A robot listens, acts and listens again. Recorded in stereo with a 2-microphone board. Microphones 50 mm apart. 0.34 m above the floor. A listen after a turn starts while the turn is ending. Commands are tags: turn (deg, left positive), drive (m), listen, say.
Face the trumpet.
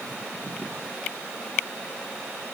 <listen/>
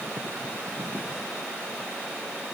<listen/>
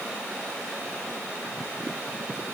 <say>I can't make out a trumpet to turn to.</say>